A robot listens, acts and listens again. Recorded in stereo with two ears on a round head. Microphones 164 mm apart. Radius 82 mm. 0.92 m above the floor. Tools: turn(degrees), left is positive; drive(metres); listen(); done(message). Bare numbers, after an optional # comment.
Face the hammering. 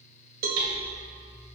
# The hammering: about 75° right or 105° right.
turn(-75)
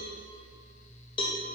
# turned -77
listen()
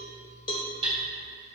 # So it is at 25° right.
turn(-25)
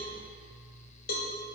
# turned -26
listen()
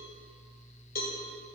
listen()
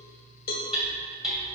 done("Facing the hammering, 2 to 4 m away.")